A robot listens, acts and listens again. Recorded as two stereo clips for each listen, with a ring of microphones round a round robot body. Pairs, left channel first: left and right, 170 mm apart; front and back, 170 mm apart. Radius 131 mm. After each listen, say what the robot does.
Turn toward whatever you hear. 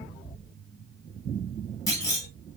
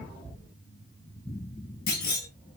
Turn 20° left.
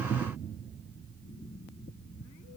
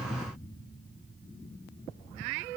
I heard a clunk from this way, but can't make it out now.